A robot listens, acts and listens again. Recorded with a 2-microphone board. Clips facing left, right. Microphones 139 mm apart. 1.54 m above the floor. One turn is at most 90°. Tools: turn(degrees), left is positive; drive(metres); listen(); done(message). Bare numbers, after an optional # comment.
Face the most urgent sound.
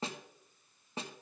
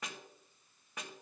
listen()
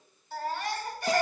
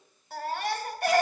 # The baby crying: about 65° right or 115° right.
turn(-65)
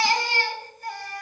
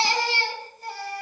# So it is at 35° right.
turn(-35)
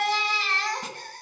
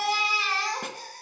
# The baby crying is now 10° right.
turn(-10)
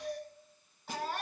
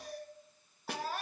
done("Facing the baby crying, 2 to 4 m away.")